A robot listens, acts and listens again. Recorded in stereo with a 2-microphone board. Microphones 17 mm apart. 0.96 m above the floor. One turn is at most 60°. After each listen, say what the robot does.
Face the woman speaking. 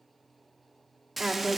Turn 25° right.
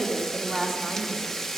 Found it: a woman speaking, straight ahead.